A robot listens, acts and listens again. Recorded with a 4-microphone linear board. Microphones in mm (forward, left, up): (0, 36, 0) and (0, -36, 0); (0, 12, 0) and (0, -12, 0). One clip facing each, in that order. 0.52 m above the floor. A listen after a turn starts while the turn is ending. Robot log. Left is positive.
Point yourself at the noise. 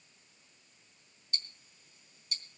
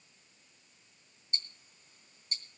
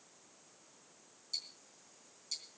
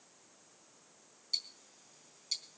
note: The ticking: about 40° right or 140° right.
cmd yaw -40
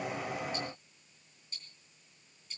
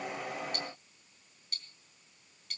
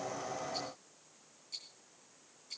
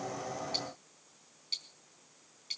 note: So it is at 105° right.
cmd yaw -105
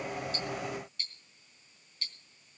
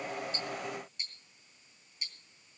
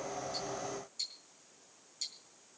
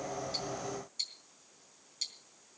note: The ticking is now 20° right.
cmd yaw -20
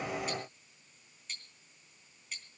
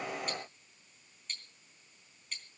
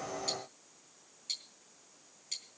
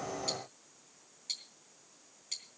end: Facing the ticking.